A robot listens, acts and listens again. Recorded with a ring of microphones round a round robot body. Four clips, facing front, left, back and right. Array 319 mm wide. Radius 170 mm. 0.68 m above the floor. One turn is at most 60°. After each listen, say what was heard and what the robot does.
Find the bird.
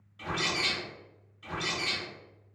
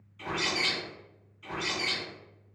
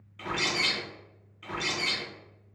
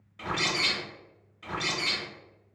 The bird: 125° right. Turn 60° right.
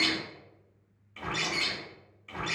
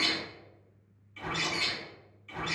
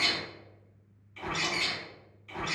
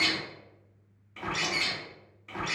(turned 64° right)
The bird is now 60° right. Turn 60° right.
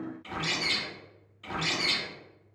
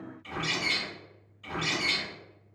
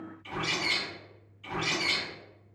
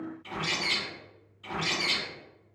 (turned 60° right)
Found it: a bird, straight ahead.